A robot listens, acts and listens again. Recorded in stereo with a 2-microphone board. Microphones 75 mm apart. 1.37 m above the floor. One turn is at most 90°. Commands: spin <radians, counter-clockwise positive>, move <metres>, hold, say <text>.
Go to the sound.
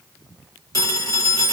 spin 0.87
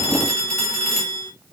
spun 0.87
move 1.0
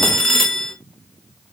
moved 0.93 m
move 1.0
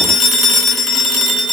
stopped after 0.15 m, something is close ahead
say Arrived at the phone ringing, straight ahead.